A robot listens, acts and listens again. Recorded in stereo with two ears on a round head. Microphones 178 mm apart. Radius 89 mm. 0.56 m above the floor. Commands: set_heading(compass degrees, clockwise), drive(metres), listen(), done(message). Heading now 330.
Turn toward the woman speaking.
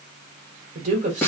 set_heading(10)
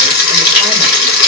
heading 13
listen()
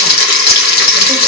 listen()
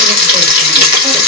done("I heard a woman speaking, but can't make it out now. It was about 5° left or 100° right.")